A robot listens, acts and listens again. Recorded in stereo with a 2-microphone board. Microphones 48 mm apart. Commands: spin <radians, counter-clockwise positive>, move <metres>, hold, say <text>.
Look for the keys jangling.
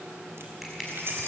spin -1.05
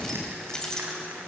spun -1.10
spin 0.26
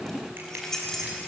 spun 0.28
spin 0.17
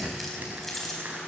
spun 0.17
say Facing the keys jangling.